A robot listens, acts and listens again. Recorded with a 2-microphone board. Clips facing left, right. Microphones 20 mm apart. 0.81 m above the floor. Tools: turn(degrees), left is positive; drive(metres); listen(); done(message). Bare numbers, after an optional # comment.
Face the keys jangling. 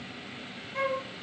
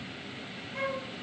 listen()
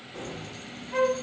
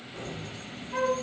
turn(90)
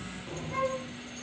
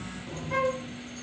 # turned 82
done("Facing the keys jangling.")